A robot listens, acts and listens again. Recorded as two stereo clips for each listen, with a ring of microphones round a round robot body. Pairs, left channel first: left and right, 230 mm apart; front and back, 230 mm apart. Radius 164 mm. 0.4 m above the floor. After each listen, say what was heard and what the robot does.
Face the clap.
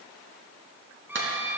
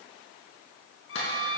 The clap: 55° right. Turn 55° right.
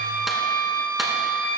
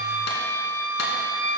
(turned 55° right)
Keep listening.
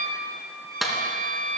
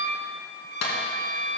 Facing the clap.